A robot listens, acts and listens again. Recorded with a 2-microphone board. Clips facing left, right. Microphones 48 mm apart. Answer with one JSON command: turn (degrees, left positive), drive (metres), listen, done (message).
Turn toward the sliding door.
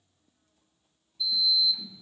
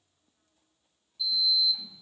{"turn": 35}
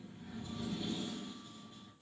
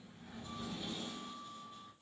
{"done": "Facing the sliding door."}